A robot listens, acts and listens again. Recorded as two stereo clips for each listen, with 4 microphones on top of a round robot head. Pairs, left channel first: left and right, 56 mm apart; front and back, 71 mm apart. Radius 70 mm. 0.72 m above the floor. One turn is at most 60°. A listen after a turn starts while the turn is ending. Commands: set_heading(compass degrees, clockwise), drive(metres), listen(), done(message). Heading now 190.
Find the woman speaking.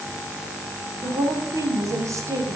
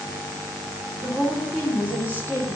set_heading(250)
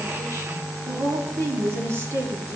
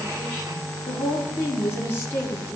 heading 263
set_heading(323)
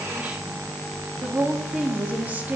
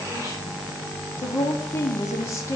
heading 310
set_heading(350)
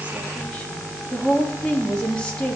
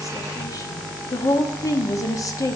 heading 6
set_heading(346)
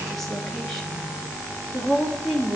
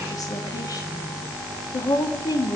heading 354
done("Found it: a woman speaking, straight ahead.")